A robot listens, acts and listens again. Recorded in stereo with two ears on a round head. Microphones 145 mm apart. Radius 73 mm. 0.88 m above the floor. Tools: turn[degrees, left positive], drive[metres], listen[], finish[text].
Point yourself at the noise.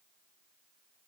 Action: listen[]
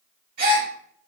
Thought: The gasp: about 55° right or 125° right.
Action: turn[-55]
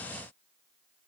Action: listen[]
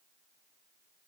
Action: finish[I heard a gasp, but can't make it out now. It was about straight ahead or 70° right.]